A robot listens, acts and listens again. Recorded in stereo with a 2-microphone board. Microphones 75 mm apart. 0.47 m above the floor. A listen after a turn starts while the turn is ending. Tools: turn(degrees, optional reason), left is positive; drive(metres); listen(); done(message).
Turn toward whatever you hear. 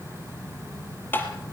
turn(degrees=25, reason="The tapping: about 25° left or 155° left.")
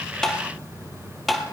done("Found it: tapping, straight ahead, 2 to 4 m away.")